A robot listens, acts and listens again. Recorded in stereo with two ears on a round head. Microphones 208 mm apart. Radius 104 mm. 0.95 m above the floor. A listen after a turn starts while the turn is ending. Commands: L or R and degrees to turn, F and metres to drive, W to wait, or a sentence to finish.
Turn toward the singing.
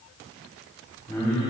L30
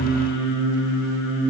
R10
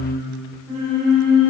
Facing the singing.